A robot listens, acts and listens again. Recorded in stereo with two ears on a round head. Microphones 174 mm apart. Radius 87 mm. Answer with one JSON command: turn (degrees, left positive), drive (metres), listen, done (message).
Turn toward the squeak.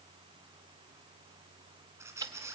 {"turn": -30}
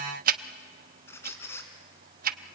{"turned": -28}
{"turn": 15}
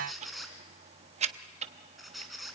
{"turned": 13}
{"done": "Found it: a squeak, straight ahead."}